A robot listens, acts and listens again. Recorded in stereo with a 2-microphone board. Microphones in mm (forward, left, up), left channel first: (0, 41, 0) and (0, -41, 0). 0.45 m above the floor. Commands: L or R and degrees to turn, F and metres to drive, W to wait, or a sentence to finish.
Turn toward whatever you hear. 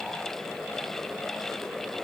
W
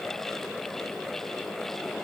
W
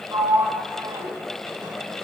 R55
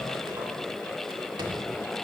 W
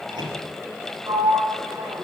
R70
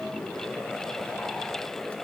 W
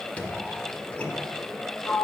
L15
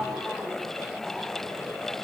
W
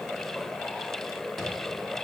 W
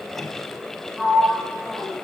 Facing the sliding door.